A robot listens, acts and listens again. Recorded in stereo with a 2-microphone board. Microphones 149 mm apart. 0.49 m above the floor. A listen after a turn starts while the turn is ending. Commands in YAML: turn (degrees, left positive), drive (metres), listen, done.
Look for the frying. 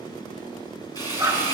turn: 25
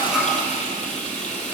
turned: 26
turn: 125
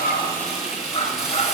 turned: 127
done: "Found it: frying, straight ahead."